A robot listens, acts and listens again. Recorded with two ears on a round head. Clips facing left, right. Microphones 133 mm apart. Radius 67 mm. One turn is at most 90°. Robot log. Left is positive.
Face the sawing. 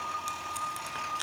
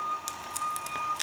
cmd idle
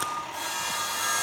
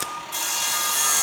cmd yaw -90
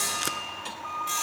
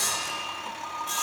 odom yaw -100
note: So it is at 15° left.
cmd yaw +15
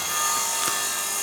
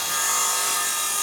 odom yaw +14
end: Found it: sawing, straight ahead.